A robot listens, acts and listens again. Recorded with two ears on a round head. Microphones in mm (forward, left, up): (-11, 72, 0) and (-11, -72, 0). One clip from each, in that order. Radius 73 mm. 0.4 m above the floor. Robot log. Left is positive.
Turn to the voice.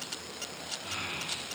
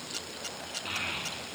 cmd yaw -90
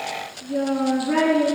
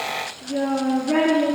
end: Facing the child speaking.